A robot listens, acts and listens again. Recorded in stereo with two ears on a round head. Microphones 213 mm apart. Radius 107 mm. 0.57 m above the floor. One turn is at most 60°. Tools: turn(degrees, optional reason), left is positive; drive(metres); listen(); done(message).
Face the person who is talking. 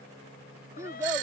turn(degrees=-30)
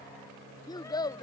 turn(degrees=20, reason="So it is at 20° left.")
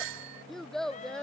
done("Facing the child speaking.")